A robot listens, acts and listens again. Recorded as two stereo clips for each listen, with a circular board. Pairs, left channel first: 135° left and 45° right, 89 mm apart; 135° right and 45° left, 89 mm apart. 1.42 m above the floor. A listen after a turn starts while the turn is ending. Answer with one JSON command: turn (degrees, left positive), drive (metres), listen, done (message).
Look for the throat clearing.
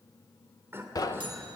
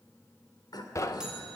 {"turn": -105}
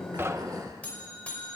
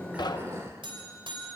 {"listen": true}
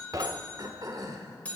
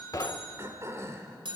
{"turn": -10}
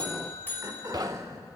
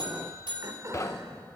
{"done": "Found it: throat clearing, straight ahead."}